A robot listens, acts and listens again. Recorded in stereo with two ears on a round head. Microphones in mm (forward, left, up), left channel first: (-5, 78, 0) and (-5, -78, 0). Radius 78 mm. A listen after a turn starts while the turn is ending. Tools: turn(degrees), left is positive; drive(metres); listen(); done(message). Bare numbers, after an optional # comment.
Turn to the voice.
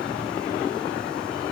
listen()
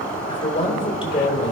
# The man speaking: about 30° left or 150° left.
turn(30)
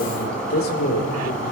# So it is at 120° left.
turn(120)
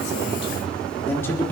# The man speaking is now 10° left.
turn(10)
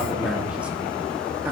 listen()
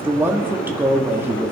# The man speaking is now 10° right.
turn(-10)
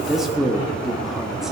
done("Facing the man speaking.")